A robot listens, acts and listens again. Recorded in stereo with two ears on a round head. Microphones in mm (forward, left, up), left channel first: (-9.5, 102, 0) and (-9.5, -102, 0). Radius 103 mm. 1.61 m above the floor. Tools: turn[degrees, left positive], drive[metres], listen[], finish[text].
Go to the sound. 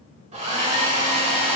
Thought: The hair dryer: about 30° right or 150° right.
Action: turn[-30]
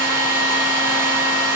Thought: So it is at 110° right.
Action: turn[-110]
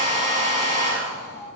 Thought: The hair dryer is now 35° right.
Action: turn[-35]
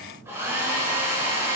Thought: The hair dryer is now 15° right.
Action: turn[-15]
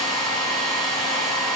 Action: drive[1.0]
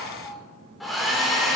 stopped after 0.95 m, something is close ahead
Action: finish[I am next to the hair dryer.]